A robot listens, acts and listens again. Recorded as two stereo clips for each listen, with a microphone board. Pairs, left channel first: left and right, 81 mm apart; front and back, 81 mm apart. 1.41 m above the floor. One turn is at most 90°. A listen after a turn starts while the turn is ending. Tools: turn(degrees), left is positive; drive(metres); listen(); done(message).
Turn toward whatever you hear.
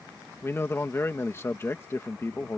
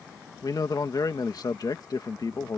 turn(degrees=35)
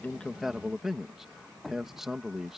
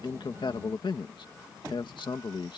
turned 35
done("Facing the man speaking.")